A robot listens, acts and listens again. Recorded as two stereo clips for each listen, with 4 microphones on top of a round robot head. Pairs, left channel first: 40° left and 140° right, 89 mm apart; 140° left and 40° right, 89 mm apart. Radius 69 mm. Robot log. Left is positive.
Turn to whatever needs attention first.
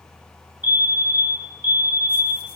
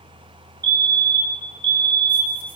note: The fire alarm: 75° right.
cmd yaw -75
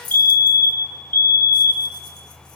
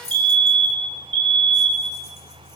note: The fire alarm is now 30° right.
cmd yaw -30
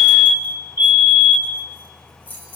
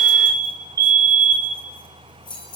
end: Found it: a fire alarm, straight ahead.